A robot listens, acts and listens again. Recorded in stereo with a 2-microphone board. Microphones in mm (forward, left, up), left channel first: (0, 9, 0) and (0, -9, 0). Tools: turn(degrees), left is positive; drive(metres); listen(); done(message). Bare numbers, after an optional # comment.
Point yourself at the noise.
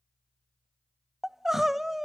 # The crying: about 15° right or 165° right.
turn(-15)
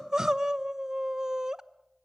# So it is at 150° right.
turn(-150)
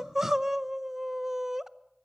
# The crying is now 20° right.
turn(-20)
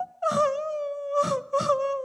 # The crying is now 10° right.
turn(-10)
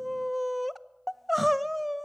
done("Found it: crying, straight ahead, under 1 m away.")